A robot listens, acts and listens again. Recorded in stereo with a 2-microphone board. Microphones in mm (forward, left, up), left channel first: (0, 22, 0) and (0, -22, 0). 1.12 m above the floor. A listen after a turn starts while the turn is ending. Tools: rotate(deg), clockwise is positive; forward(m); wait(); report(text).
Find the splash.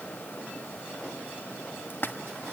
rotate(-50)
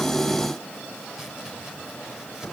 wait()
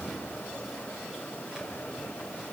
report("I heard a splash, but can't make it out now. It was about straight ahead or 80° left.")